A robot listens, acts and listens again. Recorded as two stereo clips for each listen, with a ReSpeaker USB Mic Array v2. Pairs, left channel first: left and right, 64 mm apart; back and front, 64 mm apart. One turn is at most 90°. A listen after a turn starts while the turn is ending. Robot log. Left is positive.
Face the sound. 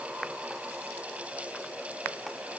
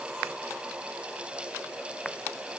cmd idle
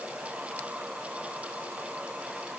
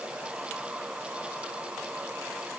cmd idle
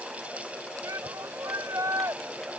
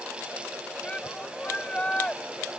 note: The shout: 110° right.
cmd yaw -90
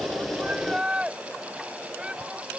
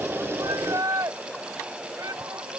note: The shout is now 15° right.
cmd yaw -15
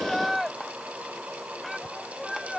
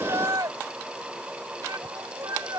end: Facing the shout.